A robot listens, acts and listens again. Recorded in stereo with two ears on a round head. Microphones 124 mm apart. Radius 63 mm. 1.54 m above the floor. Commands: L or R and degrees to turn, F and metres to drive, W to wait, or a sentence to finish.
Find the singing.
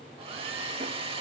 W
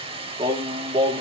R30
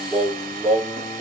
L10
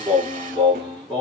Found it: singing, straight ahead.